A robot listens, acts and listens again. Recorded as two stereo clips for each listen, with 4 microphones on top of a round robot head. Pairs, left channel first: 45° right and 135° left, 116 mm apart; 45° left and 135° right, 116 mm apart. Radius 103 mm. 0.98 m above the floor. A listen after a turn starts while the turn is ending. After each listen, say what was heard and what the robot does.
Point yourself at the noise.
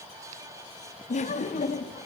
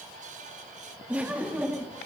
The laughter: 60° right. Turn 60° right.
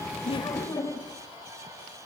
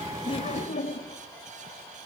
The laughter is now 20° left. Turn 20° left.
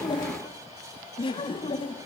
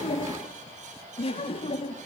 Found it: laughter, straight ahead.